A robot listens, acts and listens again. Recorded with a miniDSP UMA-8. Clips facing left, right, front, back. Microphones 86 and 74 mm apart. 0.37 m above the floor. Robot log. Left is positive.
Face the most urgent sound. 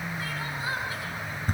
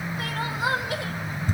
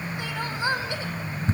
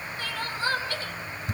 note: The crying: 75° right.
cmd yaw -75
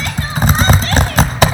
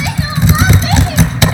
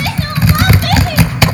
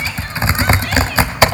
cmd idle
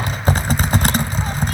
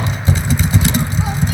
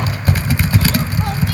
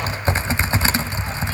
cmd idle
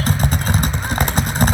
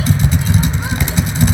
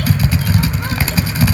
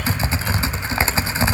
end: I heard crying from this way, but can't make it out now.